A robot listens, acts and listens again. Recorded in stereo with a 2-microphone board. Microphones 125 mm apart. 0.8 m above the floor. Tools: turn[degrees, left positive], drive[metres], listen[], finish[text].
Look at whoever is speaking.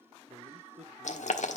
Thought: The man speaking: about 75° right or 105° right.
Action: turn[-75]
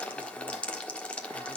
Action: listen[]
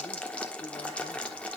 Action: listen[]
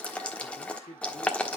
Thought: So it is at 70° left.
Action: turn[70]
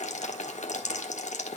Action: listen[]
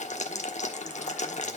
Action: listen[]
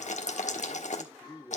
Thought: The man speaking is now 20° left.
Action: turn[20]
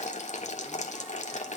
Action: listen[]
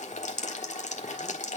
Action: listen[]
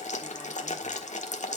Action: finish[I heard a man speaking from this way, but can't make it out now.]